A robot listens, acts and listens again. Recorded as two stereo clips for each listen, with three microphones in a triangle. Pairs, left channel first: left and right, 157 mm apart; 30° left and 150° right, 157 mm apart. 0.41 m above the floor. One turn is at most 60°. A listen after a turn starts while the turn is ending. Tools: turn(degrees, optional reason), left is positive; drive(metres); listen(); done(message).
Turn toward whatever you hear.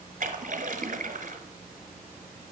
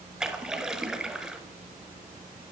turn(degrees=-60, reason="The splash: 65° right.")
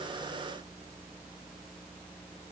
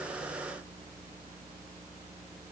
done("I heard a splash from this way, but can't make it out now.")